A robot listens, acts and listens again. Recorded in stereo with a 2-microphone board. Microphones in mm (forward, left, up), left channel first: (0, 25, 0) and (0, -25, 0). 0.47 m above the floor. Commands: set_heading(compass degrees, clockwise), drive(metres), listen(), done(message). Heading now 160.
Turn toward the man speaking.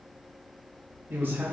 set_heading(190)
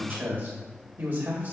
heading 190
set_heading(230)
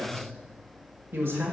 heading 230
set_heading(0)
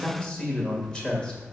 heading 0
set_heading(340)
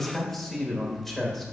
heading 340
done("Facing the man speaking.")